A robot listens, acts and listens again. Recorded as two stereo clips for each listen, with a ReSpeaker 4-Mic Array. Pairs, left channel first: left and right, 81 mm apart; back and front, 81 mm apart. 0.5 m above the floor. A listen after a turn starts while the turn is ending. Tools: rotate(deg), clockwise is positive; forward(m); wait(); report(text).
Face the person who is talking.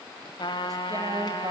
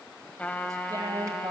rotate(45)
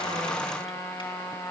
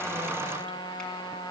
wait()
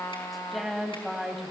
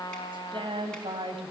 report("Facing the woman speaking, 2 to 4 m away.")